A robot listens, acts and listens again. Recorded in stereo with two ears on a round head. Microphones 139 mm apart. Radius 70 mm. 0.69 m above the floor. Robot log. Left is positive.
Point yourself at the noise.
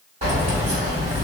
note: The keys jangling: about 45° right or 135° right.
cmd yaw -45
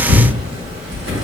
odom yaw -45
note: So it is at 85° right.
cmd yaw -85
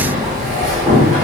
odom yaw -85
note: The keys jangling is now 20° right.
cmd yaw -20
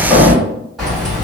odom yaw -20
end: Facing the keys jangling, 1 to 2 m away.